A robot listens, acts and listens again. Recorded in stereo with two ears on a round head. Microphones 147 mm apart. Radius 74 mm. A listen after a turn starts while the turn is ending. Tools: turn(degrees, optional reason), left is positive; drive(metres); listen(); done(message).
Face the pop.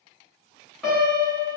listen()
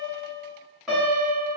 listen()
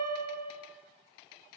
done("I can't make out a pop to turn to.")